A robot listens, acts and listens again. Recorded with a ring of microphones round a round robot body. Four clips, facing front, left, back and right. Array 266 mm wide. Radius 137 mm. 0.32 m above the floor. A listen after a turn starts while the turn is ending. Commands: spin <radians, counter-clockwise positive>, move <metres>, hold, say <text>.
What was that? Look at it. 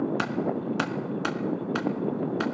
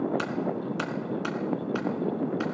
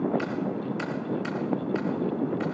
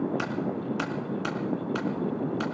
say Found it: keys jangling, straight ahead, 2 to 4 m away.